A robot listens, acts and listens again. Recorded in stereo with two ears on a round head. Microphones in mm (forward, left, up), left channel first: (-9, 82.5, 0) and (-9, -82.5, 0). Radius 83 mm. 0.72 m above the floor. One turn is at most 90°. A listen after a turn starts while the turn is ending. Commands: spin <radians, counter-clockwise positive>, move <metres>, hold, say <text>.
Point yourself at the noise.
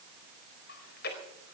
spin 0.96
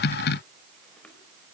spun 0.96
hold
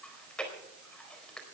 say Found it: chewing, straight ahead.